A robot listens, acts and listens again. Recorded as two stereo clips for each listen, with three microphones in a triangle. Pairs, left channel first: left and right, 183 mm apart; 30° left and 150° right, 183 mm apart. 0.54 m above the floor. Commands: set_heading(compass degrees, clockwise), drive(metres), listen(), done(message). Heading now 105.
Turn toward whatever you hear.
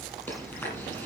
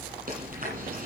set_heading(295)
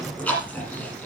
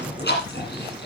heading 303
done("Facing the chewing, over 4 m away.")